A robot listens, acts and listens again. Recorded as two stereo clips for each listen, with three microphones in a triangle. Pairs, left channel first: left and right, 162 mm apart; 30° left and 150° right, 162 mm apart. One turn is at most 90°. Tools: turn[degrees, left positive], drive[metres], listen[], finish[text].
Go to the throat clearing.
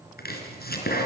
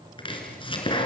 Action: listen[]
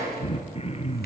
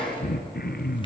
Thought: The throat clearing: 40° left.
Action: turn[40]
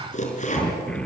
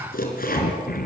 Action: drive[1.0]
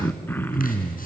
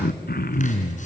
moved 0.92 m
Thought: The throat clearing is now 15° left.
Action: turn[15]
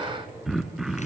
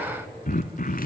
Action: drive[1.0]
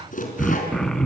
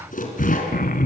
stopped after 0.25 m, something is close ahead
Action: finish[Arrived at the throat clearing, straight ahead.]